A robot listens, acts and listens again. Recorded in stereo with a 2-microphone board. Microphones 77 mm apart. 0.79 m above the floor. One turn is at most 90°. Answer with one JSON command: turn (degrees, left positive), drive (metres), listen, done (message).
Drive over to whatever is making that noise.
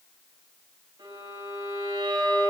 {"turn": -75}
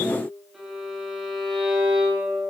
{"drive": 1.0}
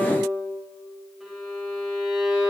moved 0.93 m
{"drive": 1.0}
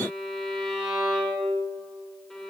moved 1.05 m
{"drive": 1.0}
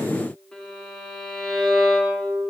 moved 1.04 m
{"turn": 10}
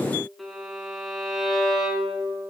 {"drive": 1.0}
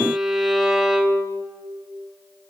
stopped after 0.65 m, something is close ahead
{"done": "Arrived at the violin, straight ahead."}